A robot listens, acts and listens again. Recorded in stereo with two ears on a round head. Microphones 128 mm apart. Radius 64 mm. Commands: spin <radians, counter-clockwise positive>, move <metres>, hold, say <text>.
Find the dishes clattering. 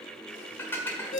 spin 0.26
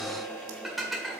say Facing the dishes clattering.